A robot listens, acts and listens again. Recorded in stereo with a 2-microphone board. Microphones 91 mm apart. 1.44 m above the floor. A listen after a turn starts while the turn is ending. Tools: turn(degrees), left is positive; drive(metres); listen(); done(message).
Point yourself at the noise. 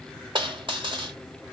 turn(degrees=-65)
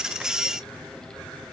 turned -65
listen()
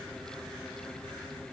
done("I heard a dropped coin, but can't make it out now. It was about straight ahead or 50° right.")